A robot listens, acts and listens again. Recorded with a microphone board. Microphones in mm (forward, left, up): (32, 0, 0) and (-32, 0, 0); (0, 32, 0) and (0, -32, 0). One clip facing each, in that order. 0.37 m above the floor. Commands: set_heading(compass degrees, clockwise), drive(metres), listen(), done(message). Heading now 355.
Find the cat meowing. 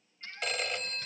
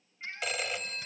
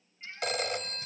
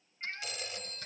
set_heading(130)
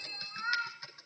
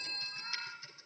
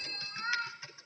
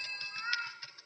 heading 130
set_heading(115)
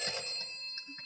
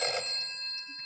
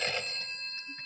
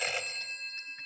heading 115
listen()
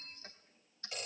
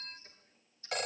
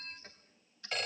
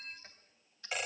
listen()
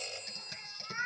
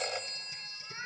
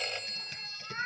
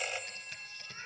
set_heading(55)
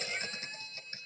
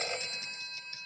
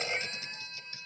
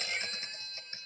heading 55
listen()
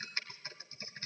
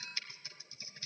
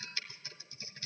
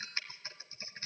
listen()
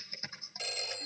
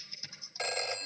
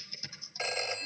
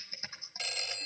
done("I heard a cat meowing from this way, but can't make it out now.")